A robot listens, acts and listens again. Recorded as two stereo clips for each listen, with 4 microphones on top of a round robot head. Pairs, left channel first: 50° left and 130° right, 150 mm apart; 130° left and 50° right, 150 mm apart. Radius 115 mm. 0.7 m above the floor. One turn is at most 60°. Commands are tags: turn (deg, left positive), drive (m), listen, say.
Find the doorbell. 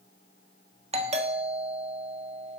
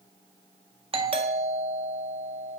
<turn deg="-60"/>
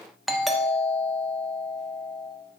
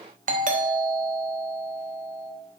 <turn deg="-40"/>
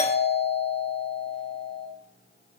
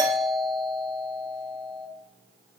<turn deg="15"/>
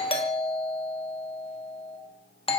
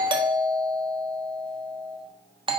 <say>Found it: a doorbell, straight ahead.</say>